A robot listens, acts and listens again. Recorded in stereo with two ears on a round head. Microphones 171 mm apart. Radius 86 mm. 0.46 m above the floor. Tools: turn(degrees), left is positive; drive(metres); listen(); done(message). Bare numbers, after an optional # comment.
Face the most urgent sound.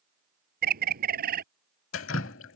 listen()
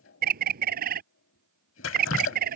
listen()
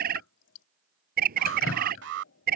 # The alarm: about 65° right or 115° right.
turn(-65)
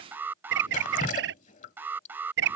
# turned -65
# So it is at 10° right.
turn(-10)
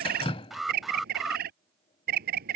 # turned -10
done("Found it: an alarm, straight ahead.")